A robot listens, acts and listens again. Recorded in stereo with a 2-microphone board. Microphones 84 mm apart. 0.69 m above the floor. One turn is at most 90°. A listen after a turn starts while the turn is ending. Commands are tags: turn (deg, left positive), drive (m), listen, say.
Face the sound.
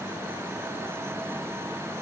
<listen/>
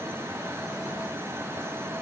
<listen/>
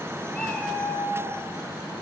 <turn deg="30"/>
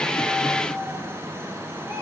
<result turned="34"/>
<turn deg="-25"/>
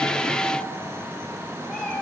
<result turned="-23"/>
<say>Found it: a cat meowing, straight ahead, over 4 m away.</say>